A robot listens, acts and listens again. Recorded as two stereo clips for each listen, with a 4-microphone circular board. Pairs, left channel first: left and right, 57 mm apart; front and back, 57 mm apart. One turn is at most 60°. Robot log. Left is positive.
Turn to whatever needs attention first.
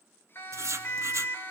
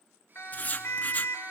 note: The siren: 45° left.
cmd yaw +45
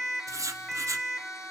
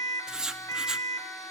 end: Facing the siren, 2 to 4 m away.